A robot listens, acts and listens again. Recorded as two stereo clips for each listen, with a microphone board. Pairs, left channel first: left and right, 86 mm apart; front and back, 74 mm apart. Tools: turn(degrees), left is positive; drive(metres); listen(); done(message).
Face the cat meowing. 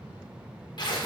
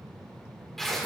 listen()
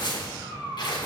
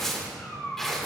turn(degrees=-50)
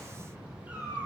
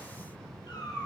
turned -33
turn(degrees=-20)
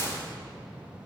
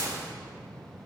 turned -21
listen()
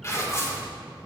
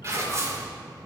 listen()
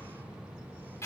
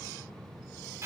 done("Facing where the cat meowing came from. I can't hear it now.")